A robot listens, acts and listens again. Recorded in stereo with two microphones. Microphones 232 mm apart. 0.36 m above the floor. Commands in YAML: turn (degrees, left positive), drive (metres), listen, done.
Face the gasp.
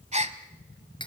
turn: -30
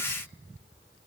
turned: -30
listen: true
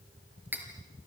done: "I heard a gasp, but can't make it out now. It was about straight ahead or 120° right."